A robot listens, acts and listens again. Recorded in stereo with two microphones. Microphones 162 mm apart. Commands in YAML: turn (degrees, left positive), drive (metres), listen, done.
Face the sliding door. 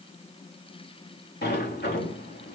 turn: 90
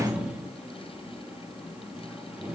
done: "Facing the sliding door, 2 to 4 m away."